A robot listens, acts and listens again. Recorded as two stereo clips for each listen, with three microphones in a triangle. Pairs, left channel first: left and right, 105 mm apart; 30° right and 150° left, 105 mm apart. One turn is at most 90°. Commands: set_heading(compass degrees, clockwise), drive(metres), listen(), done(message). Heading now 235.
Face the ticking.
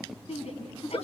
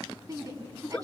listen()
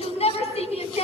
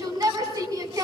listen()
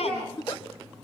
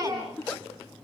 done("I can't make out ticking, only a giggle and a shout.")